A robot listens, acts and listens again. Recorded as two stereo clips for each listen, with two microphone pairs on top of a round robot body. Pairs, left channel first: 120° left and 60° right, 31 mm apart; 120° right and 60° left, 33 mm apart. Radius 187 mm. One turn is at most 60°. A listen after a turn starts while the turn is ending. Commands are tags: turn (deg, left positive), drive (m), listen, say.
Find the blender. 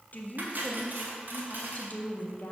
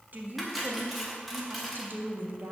<listen/>
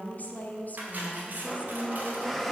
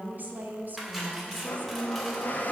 <turn deg="-60"/>
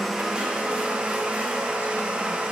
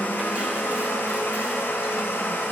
<turn deg="-60"/>
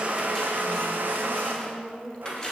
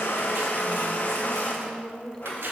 <turn deg="-60"/>
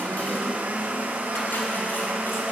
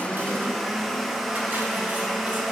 <turn deg="-30"/>
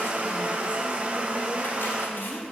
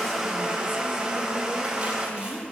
<turn deg="-10"/>
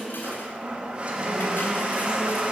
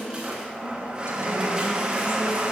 <say>Facing the blender, 1 to 2 m away.</say>